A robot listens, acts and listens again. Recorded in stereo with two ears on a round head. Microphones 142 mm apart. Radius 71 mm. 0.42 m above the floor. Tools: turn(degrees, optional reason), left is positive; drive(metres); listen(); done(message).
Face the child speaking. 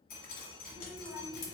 turn(degrees=-35, reason="The child speaking: about 35° right or 145° right.")
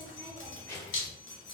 turn(degrees=20, reason="So it is at 20° left.")
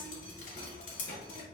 turn(degrees=40, reason="The child speaking is now 40° left.")
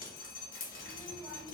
turn(degrees=15, reason="The child speaking is now 15° left.")
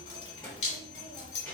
done("Found it: a child speaking, straight ahead, 1 to 2 m away.")